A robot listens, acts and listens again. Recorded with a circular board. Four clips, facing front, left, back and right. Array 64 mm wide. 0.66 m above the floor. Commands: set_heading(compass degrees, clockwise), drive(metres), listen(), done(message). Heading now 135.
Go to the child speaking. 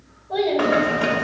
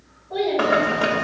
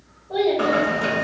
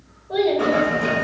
set_heading(220)
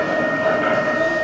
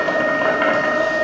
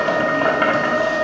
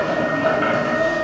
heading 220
listen()
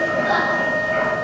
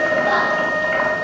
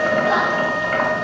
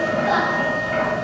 listen()
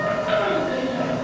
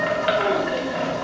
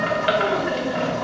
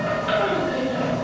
done("I heard a child speaking from this way, but can't make it out now. I did not reach it.")